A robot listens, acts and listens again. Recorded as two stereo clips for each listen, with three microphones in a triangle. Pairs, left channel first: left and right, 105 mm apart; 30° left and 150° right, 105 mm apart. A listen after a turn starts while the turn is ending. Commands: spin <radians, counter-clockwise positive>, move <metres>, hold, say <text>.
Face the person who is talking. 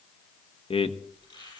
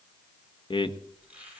spin 1.13
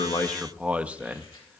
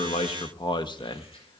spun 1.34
spin -0.26
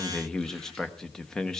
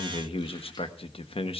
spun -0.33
say Facing the man speaking.